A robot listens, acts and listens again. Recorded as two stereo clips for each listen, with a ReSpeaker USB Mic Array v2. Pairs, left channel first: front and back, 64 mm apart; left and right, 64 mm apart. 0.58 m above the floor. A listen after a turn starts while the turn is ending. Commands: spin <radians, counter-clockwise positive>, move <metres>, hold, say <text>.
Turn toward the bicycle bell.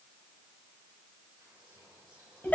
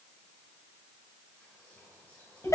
hold
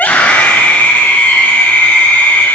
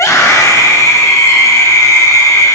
hold
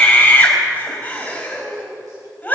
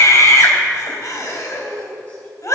say I can't make out a bicycle bell to turn to.